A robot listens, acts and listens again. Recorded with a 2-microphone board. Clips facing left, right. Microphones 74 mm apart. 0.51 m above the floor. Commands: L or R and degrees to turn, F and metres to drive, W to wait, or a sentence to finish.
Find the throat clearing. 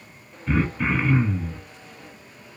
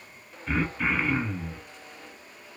L30
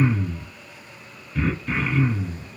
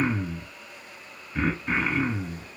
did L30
R30
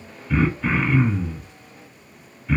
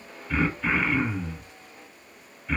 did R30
Found it: throat clearing, straight ahead, 1 to 2 m away.